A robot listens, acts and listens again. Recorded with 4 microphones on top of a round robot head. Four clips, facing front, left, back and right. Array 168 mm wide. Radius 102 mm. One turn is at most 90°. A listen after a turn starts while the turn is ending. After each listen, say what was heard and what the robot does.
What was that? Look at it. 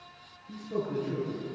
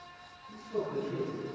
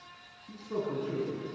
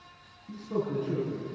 The man speaking: 125° right. Turn 90° right.
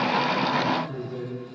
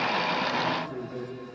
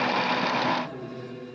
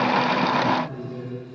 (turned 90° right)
The man speaking is now 35° right. Turn 35° right.
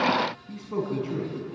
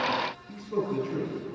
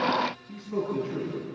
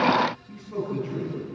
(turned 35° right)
Facing the man speaking.